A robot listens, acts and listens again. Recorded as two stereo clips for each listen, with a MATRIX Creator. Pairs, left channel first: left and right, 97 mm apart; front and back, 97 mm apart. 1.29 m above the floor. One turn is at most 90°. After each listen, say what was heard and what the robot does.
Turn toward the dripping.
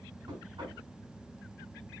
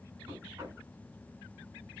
Keep listening.
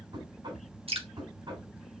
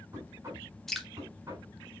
The dripping: 85° right. Turn 85° right.
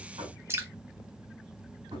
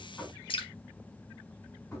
The dripping is now 25° right. Turn 25° right.
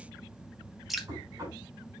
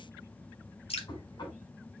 Found it: dripping, straight ahead.